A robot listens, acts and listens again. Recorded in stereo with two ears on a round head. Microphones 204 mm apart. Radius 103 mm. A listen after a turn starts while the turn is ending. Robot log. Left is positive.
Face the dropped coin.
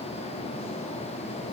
cmd idle
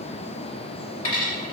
note: The dropped coin: about 40° left or 140° left.
cmd yaw +40
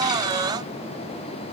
cmd idle
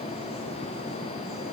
end: I heard a dropped coin, but can't make it out now. It was about straight ahead or 100° left.